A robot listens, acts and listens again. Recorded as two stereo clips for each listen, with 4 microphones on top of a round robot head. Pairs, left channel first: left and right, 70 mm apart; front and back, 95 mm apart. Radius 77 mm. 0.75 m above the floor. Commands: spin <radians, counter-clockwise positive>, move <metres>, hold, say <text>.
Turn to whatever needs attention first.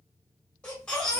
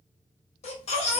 spin 0.17
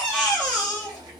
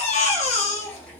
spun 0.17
say Facing the baby crying, under 1 m away.